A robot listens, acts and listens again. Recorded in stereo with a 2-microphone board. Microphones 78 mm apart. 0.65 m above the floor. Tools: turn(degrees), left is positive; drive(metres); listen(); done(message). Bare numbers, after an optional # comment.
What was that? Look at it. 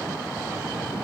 listen()
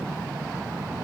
listen()
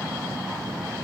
done("I can't make out anything.")